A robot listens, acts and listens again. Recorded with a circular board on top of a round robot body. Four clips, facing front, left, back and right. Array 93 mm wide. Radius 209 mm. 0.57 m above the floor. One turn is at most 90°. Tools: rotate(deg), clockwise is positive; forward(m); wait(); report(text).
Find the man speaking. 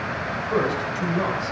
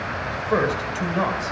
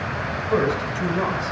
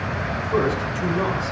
rotate(-90)
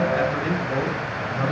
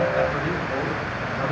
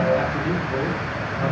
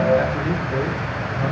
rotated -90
rotate(-30)
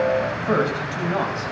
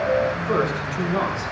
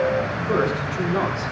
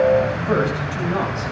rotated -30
rotate(30)
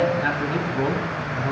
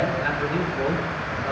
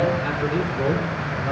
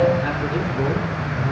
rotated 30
report("Facing the man speaking, over 4 m away.")